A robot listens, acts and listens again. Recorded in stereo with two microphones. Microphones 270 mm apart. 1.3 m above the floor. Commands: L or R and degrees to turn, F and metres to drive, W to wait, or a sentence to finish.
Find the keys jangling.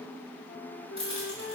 R20
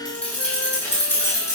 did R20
L10
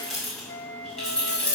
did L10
Found it: keys jangling, straight ahead, over 4 m away.